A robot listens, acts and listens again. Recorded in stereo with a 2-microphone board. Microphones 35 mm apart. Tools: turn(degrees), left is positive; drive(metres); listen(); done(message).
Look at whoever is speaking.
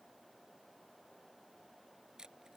listen()
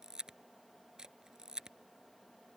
listen()
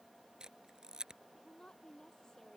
turn(degrees=15)
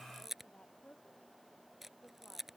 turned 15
turn(degrees=150)
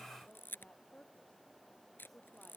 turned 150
turn(degrees=35)
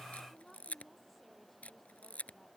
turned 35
done("Found it: a woman speaking, straight ahead.")